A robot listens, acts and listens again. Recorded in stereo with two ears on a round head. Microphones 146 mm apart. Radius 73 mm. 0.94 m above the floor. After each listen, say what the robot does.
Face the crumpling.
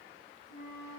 Keep listening.
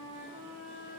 Keep listening.
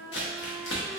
Turn 75° left.
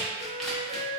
Facing the crumpling, under 1 m away.